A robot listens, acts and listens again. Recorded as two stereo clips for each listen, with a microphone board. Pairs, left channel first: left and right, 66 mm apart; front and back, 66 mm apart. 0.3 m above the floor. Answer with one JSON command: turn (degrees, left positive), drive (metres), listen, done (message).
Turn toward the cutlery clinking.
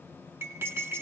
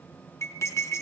{"turn": -40}
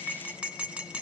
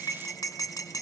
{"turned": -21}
{"turn": -20}
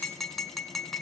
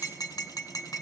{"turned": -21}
{"done": "Facing the cutlery clinking."}